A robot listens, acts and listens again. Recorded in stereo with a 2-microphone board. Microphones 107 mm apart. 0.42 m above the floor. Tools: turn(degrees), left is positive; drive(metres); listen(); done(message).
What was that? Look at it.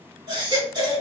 turn(degrees=-45)
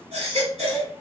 turn(degrees=-90)
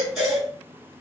done("Facing the baby crying, 1 to 2 m away.")